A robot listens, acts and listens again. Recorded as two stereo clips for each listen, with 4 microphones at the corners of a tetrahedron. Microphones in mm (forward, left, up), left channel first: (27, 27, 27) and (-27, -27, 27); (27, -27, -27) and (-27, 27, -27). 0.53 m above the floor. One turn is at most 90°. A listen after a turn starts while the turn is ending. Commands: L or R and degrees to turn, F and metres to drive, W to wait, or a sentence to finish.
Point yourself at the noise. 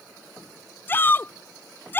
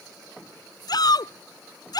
R15
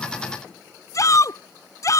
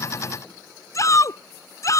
Facing the shout.